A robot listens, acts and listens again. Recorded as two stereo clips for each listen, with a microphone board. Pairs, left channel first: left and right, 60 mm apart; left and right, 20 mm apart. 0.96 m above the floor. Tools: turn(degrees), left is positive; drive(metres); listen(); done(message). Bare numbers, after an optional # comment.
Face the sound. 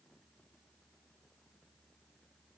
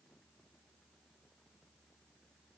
listen()
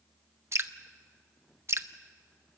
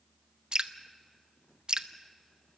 # The dripping: about 45° right or 135° right.
turn(-45)
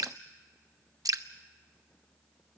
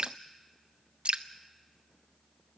# So it is at 90° right.
turn(-90)
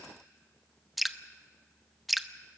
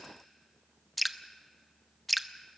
done("Found it: dripping, straight ahead, under 1 m away.")